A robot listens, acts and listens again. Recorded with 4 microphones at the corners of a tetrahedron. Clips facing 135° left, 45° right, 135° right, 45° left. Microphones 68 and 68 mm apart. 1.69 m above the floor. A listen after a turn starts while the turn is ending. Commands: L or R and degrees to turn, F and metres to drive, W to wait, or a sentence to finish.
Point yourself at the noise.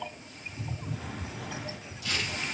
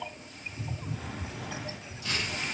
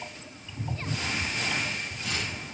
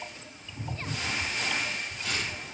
L20
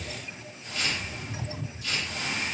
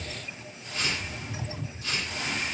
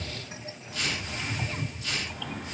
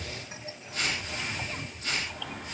Facing the tearing paper.